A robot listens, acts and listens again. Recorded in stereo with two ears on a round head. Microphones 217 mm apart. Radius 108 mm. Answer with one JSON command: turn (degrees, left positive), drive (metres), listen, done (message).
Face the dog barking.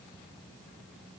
{"listen": true}
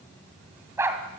{"turn": -30}
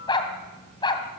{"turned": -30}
{"turn": 20}
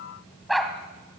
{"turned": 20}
{"done": "Facing the dog barking."}